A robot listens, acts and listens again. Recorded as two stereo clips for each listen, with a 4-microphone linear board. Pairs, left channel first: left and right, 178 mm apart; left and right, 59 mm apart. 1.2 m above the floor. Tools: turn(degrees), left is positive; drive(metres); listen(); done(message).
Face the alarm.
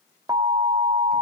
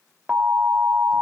turn(degrees=-20)
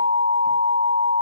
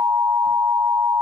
turn(degrees=-140)
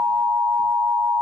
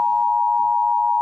turn(degrees=-20)
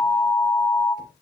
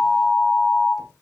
done("Found it: an alarm, straight ahead.")